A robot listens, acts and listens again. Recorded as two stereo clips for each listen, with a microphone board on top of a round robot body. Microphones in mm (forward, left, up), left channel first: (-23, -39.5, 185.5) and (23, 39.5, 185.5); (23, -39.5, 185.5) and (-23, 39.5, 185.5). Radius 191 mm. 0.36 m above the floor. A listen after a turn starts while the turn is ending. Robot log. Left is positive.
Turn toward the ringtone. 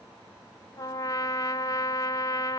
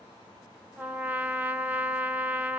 cmd idle
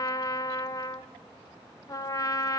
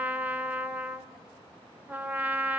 cmd idle
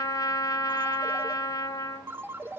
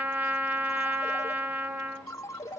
end: Found it: a ringtone, straight ahead.